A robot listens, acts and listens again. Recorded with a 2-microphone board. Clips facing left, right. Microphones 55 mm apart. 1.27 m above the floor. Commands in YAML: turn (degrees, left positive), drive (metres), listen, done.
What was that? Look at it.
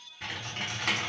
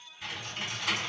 turn: 55
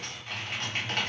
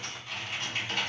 turn: 60
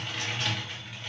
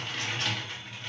done: "Facing the typing on a keyboard, 1 to 2 m away."